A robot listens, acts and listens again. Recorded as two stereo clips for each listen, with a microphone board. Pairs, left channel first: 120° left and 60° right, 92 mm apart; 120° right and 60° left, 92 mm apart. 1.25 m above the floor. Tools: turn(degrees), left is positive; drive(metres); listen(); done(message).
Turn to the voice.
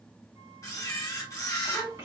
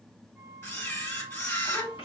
turn(degrees=-115)
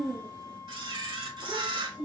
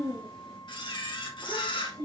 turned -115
turn(degrees=10)
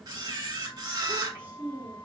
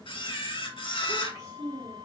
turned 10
turn(degrees=10)
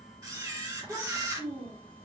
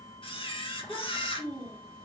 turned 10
done("Found it: a child speaking, straight ahead, 2 to 4 m away.")